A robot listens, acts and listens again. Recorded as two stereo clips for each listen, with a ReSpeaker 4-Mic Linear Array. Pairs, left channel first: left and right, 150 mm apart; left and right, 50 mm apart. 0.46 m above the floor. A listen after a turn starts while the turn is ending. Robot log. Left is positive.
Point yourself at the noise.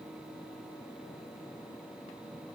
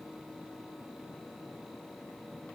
cmd idle
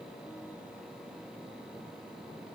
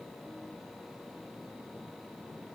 cmd idle
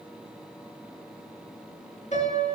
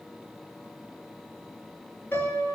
note: The piano: about 50° left or 130° left.
cmd yaw +50
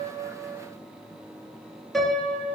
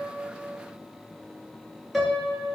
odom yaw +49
end: Facing the piano, 2 to 4 m away.